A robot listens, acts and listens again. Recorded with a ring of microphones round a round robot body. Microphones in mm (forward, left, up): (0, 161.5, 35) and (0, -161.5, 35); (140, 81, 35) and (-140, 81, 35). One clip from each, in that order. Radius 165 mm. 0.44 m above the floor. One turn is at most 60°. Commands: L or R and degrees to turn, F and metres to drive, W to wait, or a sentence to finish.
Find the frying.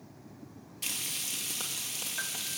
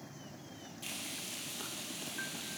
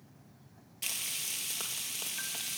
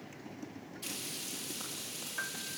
L30
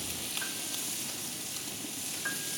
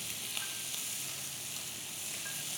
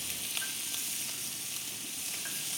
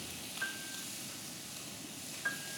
Found it: frying, straight ahead.